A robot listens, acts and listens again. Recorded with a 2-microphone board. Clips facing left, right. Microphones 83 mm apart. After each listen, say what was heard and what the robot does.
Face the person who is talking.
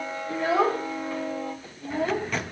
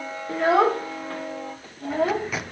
The child speaking: about 65° right or 115° right. Turn 65° right.
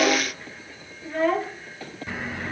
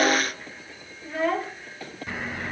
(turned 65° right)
Facing the child speaking.